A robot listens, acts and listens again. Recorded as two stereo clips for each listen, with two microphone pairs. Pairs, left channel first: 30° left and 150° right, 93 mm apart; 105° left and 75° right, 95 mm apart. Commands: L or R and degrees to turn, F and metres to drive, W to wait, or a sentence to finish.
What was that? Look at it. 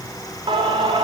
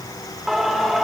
R160
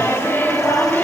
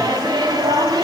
R40
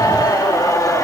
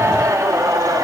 R25
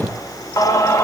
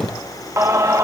R25
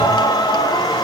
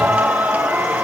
Found it: singing, straight ahead.